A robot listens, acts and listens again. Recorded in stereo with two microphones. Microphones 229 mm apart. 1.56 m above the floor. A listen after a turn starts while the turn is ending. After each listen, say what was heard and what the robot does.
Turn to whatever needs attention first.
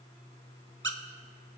Keep listening.
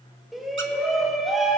Turn 30° left.
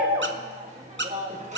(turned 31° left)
So it is at 30° right. Turn 30° right.
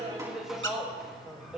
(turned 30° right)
Found it: a shout, straight ahead, 2 to 4 m away.